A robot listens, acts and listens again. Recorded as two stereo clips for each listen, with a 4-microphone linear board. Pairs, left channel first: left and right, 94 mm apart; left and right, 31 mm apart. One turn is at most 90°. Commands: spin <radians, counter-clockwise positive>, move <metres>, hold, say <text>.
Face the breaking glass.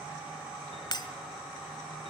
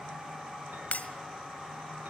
spin 0.87
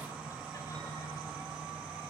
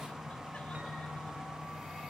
hold
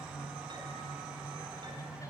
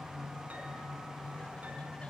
say I heard breaking glass, but can't make it out now. It was about straight ahead or 80° left.